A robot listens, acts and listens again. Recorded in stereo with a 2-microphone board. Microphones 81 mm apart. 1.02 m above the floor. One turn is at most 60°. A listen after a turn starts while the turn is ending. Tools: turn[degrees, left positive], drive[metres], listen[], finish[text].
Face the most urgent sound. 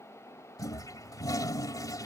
Action: listen[]
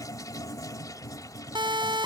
Thought: The siren: about 75° right or 105° right.
Action: turn[-60]
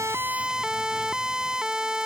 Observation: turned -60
Thought: So it is at 10° right.
Action: turn[-10]
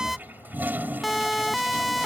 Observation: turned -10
Action: finish[Found it: a siren, straight ahead.]